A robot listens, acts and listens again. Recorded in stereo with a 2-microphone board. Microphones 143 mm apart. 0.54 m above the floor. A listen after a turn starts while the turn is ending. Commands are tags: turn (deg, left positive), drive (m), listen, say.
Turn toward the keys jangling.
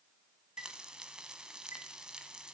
<listen/>
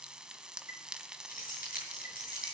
<turn deg="90"/>
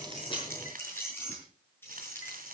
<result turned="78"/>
<turn deg="15"/>
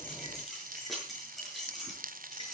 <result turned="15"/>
<say>Facing the keys jangling, over 4 m away.</say>